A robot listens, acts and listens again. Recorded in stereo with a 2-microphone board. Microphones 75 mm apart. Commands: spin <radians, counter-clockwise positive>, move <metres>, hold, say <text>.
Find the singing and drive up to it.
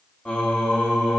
spin 0.52
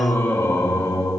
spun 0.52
spin 2.44
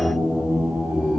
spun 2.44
spin -0.44
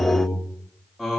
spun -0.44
move 1.0
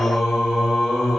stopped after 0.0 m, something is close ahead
say Something is in my way. I am facing the singing but have not reached it.